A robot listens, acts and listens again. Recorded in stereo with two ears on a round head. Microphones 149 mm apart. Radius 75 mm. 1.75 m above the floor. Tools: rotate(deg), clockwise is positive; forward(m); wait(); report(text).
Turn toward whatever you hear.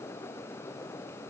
wait()
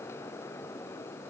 wait()
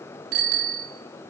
rotate(55)
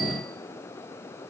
wait()
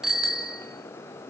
report("Facing the bicycle bell, 2 to 4 m away.")